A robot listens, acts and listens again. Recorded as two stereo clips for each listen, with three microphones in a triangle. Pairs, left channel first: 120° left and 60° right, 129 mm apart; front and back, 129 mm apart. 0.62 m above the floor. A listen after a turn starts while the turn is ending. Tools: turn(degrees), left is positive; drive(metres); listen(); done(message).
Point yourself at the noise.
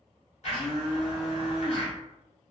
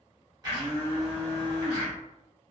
turn(degrees=130)
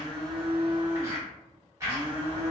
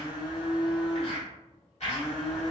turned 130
done("Found it: a blender, straight ahead, 1 to 2 m away.")